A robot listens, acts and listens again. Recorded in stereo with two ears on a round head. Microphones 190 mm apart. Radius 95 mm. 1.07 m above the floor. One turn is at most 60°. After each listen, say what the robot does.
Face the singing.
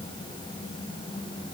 Keep listening.
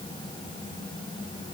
Keep listening.
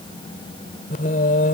Turn 40° left.
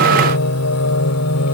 Turn 60° left.
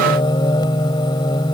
Turn 20° left.
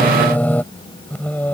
Turn 10° left.
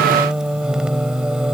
Facing the singing.